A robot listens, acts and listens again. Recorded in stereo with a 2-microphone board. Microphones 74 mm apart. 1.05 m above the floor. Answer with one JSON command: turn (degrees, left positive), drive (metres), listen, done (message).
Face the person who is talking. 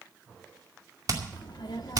{"turn": 75}
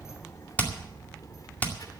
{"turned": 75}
{"turn": 60}
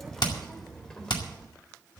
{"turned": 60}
{"turn": 10}
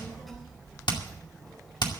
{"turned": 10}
{"done": "Facing the child speaking, over 4 m away."}